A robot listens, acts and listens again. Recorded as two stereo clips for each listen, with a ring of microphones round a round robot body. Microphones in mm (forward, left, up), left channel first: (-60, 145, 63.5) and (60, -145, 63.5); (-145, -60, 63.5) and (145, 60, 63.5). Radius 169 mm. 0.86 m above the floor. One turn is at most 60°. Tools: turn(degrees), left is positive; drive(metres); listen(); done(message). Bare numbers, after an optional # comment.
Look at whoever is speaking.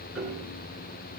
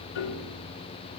listen()
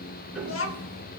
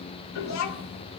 # The child speaking: 165° left.
turn(60)
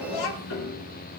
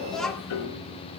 # The child speaking is now 115° left.
turn(60)
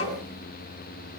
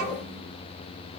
# Nothing new. It was at 55° left.
turn(55)
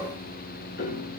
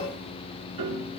listen()
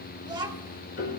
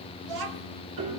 # The child speaking is now 10° left.
turn(10)
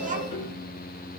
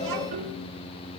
listen()
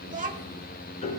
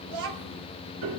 done("Facing the child speaking, 1 to 2 m away.")